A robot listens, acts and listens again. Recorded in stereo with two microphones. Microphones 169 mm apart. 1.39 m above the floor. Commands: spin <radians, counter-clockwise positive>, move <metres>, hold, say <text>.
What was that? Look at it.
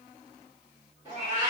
spin -0.26
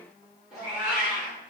say Found it: a cat meowing, straight ahead.